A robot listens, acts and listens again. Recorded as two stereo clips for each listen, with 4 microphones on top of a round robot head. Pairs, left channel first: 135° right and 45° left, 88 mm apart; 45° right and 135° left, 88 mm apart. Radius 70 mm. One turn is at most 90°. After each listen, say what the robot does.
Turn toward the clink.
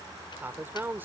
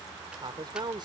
Keep listening.
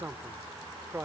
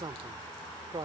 Keep listening.
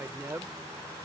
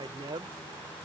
I can't make out a clink to turn to.